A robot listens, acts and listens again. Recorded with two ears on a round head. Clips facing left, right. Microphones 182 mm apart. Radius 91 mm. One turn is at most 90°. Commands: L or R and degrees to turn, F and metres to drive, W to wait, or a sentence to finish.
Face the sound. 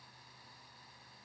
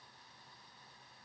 W
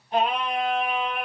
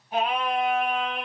L30
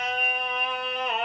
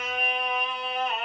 L90
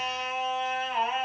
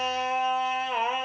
R60
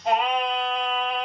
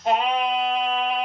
Facing the singing.